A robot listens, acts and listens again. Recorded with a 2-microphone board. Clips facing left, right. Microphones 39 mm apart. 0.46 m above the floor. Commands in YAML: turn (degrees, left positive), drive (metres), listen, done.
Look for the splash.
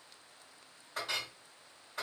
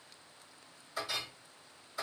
listen: true
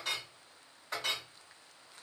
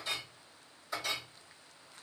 listen: true
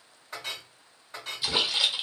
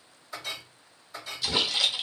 turn: 15
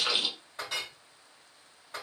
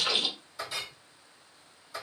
done: "Facing the splash."